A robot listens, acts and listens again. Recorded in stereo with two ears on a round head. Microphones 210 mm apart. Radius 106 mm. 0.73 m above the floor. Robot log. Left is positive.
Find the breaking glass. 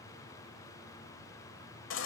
cmd idle
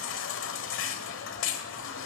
cmd idle
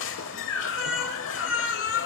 end: I can't make out breaking glass, only a baby crying.